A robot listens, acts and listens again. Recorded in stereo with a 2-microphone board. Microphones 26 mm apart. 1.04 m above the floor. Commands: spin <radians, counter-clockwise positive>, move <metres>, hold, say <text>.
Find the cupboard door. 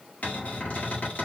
spin 1.57
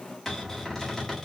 spin 0.26
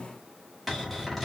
say Found it: a cupboard door, straight ahead.